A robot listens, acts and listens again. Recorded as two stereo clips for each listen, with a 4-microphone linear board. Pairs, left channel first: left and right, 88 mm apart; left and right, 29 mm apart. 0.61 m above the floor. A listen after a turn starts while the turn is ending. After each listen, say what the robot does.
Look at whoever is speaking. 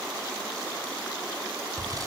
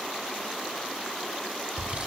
Keep listening.
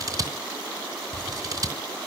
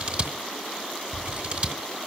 Keep listening.
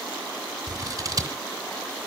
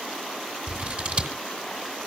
I can't make out anyone speaking, only scissors.